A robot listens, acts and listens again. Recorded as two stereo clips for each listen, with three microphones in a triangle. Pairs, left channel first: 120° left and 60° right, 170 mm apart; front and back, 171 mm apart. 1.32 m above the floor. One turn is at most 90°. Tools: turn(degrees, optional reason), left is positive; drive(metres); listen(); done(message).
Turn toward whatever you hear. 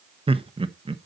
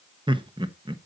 turn(degrees=-90, reason="The laughter: 120° right.")
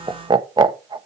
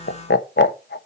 done("Facing the laughter.")